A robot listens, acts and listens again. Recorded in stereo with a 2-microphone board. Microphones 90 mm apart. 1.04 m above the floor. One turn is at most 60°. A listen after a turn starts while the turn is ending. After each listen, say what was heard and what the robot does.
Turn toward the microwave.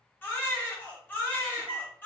The microwave: about 60° right or 120° right. Turn 60° right.
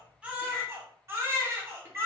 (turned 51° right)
Keep listening.
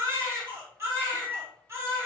So it is at 30° right. Turn 30° right.
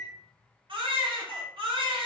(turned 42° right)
The microwave is now 15° left. Turn 15° left.
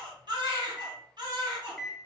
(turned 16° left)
Facing the microwave, under 1 m away.